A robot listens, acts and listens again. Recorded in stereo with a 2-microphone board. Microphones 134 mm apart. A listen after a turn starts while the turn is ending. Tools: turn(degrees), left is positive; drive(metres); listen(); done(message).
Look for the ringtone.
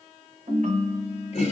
turn(degrees=-65)
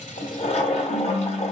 turn(degrees=-45)
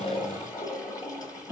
turn(degrees=-15)
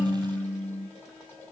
done("Found it: a ringtone, straight ahead.")